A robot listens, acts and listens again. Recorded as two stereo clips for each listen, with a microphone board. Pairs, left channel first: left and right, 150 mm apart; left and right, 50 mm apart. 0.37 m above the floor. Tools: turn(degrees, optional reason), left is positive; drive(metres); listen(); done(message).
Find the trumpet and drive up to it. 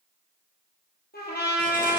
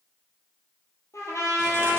turn(degrees=90)
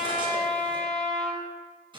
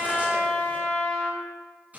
drive(metres=1.0)
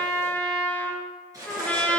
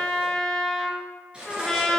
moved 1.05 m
turn(degrees=10, reason="The trumpet is now 10° left.")
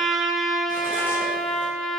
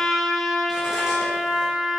drive(metres=1.0)
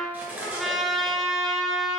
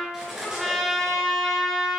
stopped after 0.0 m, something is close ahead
done("I am next to the trumpet.")